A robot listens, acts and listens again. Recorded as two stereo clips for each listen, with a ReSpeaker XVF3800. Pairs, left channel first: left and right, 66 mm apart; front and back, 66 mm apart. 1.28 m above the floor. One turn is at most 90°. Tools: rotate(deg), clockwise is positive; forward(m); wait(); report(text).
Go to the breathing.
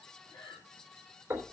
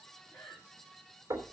rotate(-85)
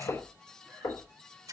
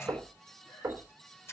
wait()
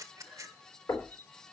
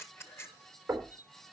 wait()
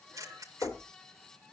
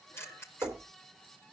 forward(1.0)
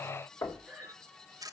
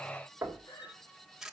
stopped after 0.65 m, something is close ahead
rotate(10)
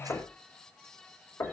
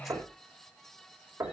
wait()
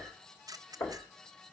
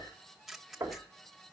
wait()
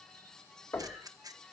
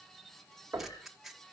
report("Facing where the breathing came from. I can't hear it now. I did not reach it.")